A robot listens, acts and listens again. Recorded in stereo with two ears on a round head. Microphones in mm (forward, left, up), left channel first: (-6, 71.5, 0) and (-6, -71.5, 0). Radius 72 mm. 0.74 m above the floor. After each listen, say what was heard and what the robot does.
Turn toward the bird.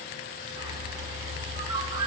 The bird: about 30° right or 150° right. Turn 30° right.
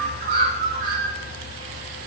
So it is at 115° right. Turn 115° right.
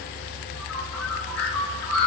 The bird is now 10° left. Turn 10° left.
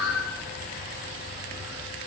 Facing the bird, 2 to 4 m away.